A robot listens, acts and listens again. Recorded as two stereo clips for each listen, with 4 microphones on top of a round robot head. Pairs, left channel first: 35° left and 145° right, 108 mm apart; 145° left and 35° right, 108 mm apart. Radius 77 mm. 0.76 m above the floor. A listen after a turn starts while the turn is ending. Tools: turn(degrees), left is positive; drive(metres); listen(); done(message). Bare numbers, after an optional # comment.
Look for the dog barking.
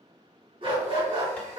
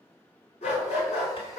# The dog barking: 170° left.
turn(170)
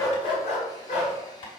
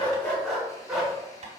# The dog barking is now 55° left.
turn(55)
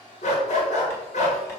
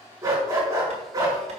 # The dog barking is now 25° left.
turn(25)
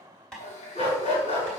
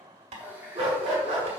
done("Found it: a dog barking, straight ahead, over 4 m away.")